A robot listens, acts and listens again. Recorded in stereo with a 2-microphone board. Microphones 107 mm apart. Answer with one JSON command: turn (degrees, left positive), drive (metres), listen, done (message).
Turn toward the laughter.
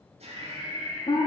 {"turn": -90}
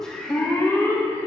{"turn": 10}
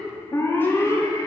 {"listen": true}
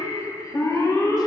{"listen": true}
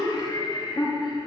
{"turn": 45}
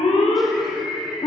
{"done": "Found it: laughter, straight ahead, 2 to 4 m away."}